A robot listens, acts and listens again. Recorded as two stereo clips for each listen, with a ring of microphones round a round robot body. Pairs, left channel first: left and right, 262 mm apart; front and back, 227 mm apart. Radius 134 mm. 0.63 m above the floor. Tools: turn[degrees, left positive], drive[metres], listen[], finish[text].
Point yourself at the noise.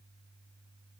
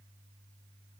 Action: listen[]
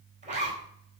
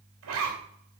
Thought: The zipper: 155° right.
Action: turn[-155]
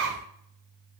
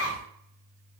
Thought: The zipper is now 50° right.
Action: turn[-50]
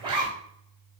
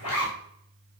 Thought: The zipper is now 15° right.
Action: turn[-15]
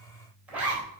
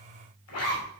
Action: finish[Facing the zipper, 2 to 4 m away.]